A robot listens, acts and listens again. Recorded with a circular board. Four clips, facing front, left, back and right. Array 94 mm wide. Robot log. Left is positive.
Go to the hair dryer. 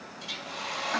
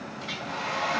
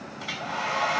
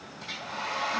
note: The hair dryer: 170° left.
cmd yaw +170
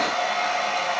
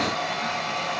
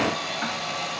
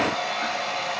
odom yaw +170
cmd fwd 1.0
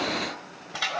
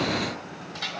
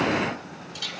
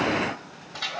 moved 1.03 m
cmd fwd 1.0
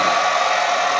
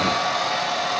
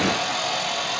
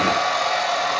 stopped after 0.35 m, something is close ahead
note: The hair dryer is now 10° right.
cmd yaw -10
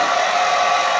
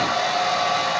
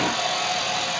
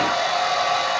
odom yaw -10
end: Arrived at the hair dryer, straight ahead.